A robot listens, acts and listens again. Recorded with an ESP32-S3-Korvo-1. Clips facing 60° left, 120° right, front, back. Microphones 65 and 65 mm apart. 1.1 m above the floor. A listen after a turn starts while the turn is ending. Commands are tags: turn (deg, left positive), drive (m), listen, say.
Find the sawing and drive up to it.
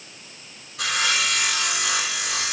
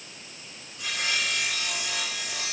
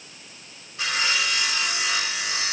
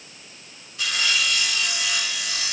<turn deg="70"/>
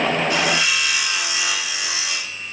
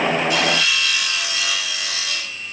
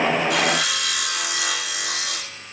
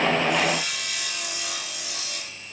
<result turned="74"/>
<drive m="1.0"/>
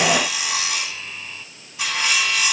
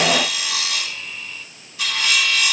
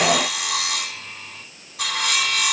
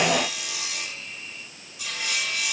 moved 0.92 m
<drive m="1.0"/>
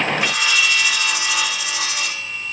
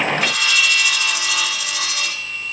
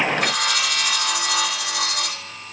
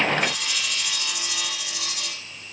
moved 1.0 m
<turn deg="-10"/>
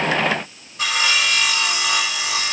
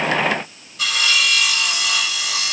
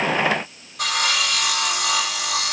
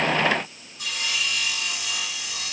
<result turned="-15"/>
<drive m="1.0"/>
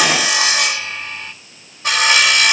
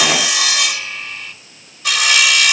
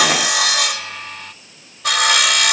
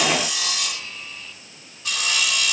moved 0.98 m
<turn deg="10"/>
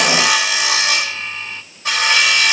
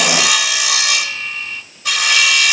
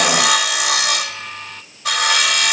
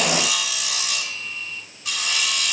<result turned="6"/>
<drive m="1.0"/>
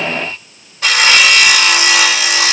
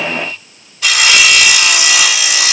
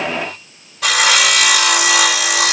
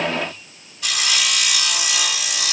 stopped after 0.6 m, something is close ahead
<turn deg="10"/>
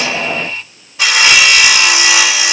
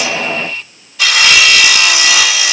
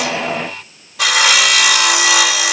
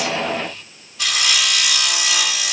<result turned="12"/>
<say>I am next to the sawing.</say>